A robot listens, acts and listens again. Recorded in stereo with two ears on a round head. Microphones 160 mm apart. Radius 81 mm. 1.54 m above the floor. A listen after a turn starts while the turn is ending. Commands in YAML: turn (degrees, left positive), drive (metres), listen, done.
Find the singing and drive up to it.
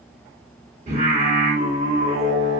turn: -45
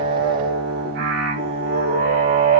turn: -90
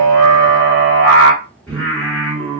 turn: 10
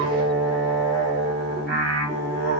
drive: 1.0
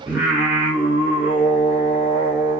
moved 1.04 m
turn: -10
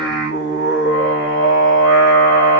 drive: 1.0
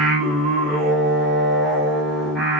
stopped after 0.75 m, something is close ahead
done: "Arrived at the singing, straight ahead."